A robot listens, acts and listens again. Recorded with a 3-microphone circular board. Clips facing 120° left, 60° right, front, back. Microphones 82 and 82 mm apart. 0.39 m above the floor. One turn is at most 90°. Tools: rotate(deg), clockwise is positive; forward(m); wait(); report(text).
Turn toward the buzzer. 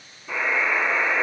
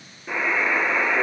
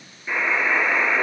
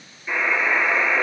rotate(80)
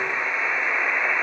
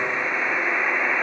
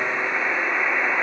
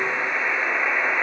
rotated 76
report("Facing the buzzer, 2 to 4 m away.")